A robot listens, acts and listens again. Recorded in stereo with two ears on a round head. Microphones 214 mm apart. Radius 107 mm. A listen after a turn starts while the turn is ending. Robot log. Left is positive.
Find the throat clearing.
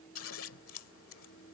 cmd idle
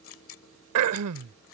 note: The throat clearing: about 70° right or 110° right.
cmd yaw -70
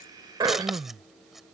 note: So it is at 20° right.
cmd yaw -20
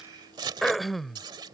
end: Facing the throat clearing.